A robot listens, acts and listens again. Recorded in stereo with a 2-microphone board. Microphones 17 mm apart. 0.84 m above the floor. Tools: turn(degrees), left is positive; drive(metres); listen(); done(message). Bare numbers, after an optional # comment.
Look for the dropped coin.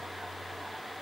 listen()
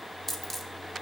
turn(30)
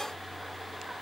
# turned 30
listen()
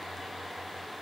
done("I heard a dropped coin, but can't make it out now. It was about 15° right or 135° left.")